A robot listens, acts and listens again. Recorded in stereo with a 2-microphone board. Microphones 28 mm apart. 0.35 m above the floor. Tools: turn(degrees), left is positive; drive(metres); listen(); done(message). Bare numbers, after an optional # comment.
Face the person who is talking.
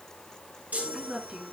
# The woman speaking: about 40° right or 140° right.
turn(-40)
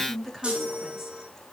done("Facing the woman speaking.")